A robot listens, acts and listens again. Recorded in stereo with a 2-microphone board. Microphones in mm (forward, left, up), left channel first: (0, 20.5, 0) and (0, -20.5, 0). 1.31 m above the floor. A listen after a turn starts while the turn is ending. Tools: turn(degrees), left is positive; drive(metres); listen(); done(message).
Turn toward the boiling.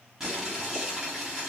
turn(degrees=-30)
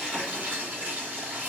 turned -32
turn(degrees=-140)
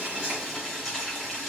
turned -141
done("Facing the boiling, 2 to 4 m away.")